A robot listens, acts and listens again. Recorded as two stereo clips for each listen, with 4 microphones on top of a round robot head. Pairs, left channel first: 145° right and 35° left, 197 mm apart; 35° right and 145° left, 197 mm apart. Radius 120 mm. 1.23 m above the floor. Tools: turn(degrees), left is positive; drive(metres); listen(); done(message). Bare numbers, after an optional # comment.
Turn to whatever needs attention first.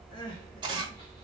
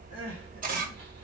# The crying: 145° left.
turn(145)
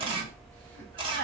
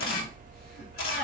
# The crying is now 10° left.
turn(10)
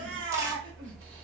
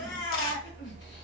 done("Found it: crying, straight ahead, 1 to 2 m away.")